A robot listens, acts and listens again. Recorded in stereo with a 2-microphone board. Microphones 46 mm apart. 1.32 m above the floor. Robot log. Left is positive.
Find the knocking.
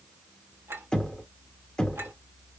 note: The knocking: about 15° left or 165° left.
cmd yaw +15
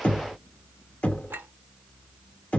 note: So it is at 150° left.
cmd yaw +150
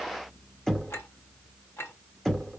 note: The knocking is now 10° left.
cmd yaw +10
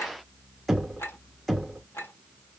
end: Found it: knocking, straight ahead.